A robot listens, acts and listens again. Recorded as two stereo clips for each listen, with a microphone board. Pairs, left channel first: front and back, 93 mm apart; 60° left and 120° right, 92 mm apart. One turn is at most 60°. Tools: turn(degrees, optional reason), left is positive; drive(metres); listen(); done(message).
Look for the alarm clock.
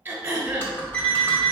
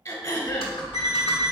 turn(degrees=-60, reason="The alarm clock: 80° right.")
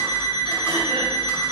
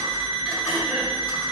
turn(degrees=-35, reason="The alarm clock is now 35° right.")
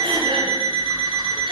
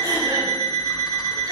done("Facing the alarm clock, 1 to 2 m away.")